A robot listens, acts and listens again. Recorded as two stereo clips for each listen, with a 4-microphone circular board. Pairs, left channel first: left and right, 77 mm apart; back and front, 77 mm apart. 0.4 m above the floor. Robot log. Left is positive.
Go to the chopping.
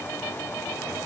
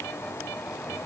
cmd idle
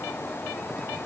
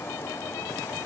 cmd idle
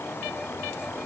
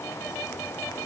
end: I can't make out chopping.